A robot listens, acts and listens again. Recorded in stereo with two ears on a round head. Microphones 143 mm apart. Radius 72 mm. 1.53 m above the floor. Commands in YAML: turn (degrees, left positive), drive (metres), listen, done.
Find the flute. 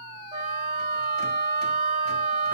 turn: -30
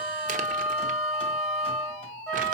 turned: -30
done: "Facing the flute, 2 to 4 m away."